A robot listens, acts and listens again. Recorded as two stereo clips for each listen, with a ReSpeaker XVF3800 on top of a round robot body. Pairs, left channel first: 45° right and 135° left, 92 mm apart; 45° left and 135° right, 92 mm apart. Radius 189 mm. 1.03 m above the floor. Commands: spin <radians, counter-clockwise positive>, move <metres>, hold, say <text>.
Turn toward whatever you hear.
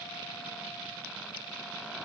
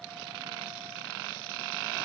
hold
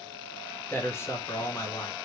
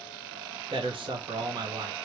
spin -1.66
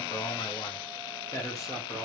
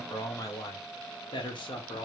spin 0.26
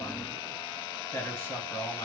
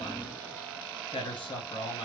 spin 0.26
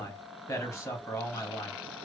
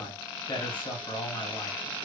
say Found it: a man speaking, straight ahead.